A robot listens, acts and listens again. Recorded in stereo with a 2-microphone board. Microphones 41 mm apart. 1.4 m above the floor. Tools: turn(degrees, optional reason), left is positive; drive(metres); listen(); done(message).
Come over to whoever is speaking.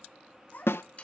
turn(degrees=50, reason="The child speaking: about 50° left or 130° left.")
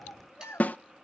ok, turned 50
turn(degrees=75, reason="So it is at 75° left.")
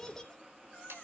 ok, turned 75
turn(degrees=15, reason="The child speaking is now 15° left.")
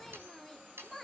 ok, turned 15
drive(metres=1.0)
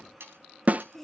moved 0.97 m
turn(degrees=10, reason="The child speaking is now 10° left.")
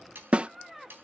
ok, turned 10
drive(metres=1.0)
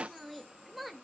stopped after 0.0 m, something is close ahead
done("Arrived at the child speaking, straight ahead.")